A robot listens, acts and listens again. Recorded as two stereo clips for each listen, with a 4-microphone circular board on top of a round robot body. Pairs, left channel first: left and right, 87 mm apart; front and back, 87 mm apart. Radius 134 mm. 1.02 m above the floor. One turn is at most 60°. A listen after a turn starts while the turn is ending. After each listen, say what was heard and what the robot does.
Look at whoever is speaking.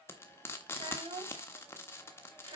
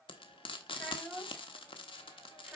The child speaking: 90° right. Turn 60° right.
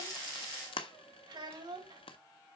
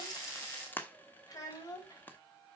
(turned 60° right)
The child speaking is now 50° right. Turn 50° right.
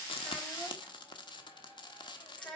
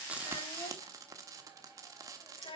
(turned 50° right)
Found it: a child speaking, straight ahead, over 4 m away.